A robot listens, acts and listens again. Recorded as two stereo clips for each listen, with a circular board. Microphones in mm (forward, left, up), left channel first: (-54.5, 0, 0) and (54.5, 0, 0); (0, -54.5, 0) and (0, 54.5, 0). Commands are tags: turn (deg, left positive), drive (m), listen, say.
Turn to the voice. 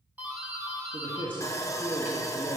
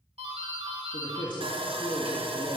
<turn deg="-45"/>
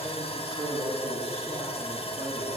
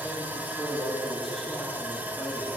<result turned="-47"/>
<say>Facing the man speaking, 2 to 4 m away.</say>